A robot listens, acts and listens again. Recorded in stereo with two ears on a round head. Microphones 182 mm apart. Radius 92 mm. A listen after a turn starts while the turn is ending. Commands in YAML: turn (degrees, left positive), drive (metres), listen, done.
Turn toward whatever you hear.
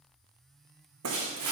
turn: -90
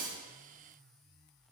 done: "I heard breaking glass from this way, but can't make it out now."